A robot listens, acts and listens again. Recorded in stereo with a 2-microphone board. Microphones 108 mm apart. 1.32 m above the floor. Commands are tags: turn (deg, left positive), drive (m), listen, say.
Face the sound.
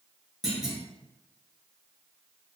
<turn deg="-30"/>
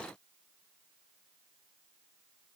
<listen/>
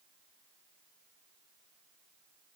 <say>I heard a clunk, but can't make it out now. It was about 25° left or 145° right.</say>